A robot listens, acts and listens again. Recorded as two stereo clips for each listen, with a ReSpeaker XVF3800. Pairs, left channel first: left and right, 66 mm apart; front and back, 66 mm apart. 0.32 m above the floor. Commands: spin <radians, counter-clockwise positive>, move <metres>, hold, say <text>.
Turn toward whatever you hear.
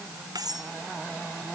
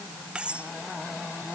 spin -1.83
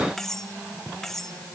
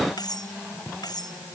say Found it: cutlery clinking, straight ahead.